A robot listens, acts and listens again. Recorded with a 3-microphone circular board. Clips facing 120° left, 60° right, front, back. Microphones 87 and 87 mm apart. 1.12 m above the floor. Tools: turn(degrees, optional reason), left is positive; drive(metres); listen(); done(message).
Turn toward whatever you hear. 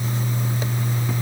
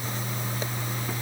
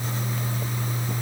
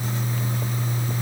listen()
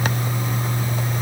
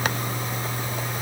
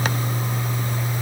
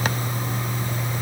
listen()
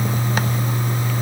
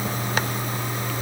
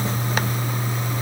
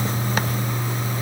done("I can't make out anything.")